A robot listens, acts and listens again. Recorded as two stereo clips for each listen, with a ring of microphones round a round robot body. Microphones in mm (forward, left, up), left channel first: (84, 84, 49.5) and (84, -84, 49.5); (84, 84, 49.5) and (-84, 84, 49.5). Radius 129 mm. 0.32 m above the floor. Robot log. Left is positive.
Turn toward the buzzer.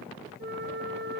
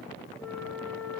cmd idle
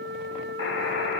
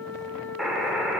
note: The buzzer: 90° left.
cmd yaw +90
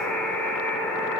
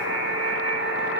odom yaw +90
end: Facing the buzzer.